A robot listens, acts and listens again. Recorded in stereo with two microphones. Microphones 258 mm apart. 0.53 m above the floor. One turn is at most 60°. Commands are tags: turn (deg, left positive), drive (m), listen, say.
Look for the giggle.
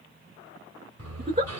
<turn deg="-35"/>
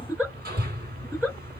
<say>Found it: a giggle, straight ahead.</say>